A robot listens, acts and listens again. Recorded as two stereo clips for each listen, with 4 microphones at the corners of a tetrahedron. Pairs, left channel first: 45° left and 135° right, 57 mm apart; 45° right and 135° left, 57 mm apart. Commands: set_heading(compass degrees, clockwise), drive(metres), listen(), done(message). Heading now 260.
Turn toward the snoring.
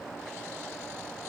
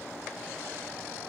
listen()
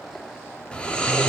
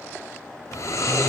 set_heading(285)
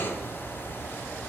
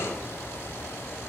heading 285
done("Found it: snoring, straight ahead.")